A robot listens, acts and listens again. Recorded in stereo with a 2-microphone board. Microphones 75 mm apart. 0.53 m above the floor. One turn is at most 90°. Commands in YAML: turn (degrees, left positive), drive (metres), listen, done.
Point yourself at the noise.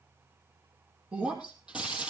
turn: -30
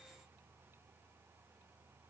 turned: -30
listen: true
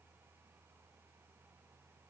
done: "I heard breaking glass, but can't make it out now. It was about 15° left or 135° right."